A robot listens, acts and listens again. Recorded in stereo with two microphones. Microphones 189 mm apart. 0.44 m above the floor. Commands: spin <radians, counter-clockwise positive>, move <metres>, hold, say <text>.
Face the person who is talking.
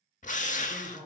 spin 0.52
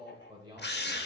spin -0.44
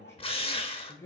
spin 0.26
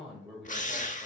say Facing the man speaking.